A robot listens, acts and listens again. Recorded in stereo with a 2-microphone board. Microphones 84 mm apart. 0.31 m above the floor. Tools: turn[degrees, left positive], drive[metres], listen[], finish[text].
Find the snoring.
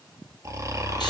Thought: The snoring: about 40° right or 140° right.
Action: turn[-40]
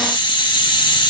Action: listen[]
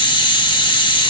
Action: listen[]
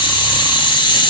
Action: finish[I heard snoring, but can't make it out now. It was about straight ahead or 100° right.]